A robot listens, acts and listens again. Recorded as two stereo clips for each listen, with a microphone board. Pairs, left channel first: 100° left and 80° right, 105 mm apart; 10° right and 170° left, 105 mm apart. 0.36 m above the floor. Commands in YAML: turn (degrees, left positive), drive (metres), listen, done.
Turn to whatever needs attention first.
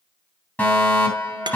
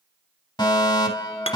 turn: 30
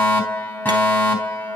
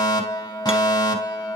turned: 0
turn: 35
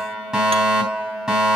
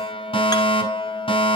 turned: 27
done: "Facing the fire alarm, 2 to 4 m away."